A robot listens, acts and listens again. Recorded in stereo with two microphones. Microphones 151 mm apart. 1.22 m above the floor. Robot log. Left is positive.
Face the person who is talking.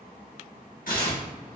cmd idle
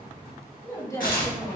note: The woman speaking: about 20° left or 160° left.
cmd yaw +20
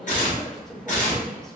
end: Facing the woman speaking, under 1 m away.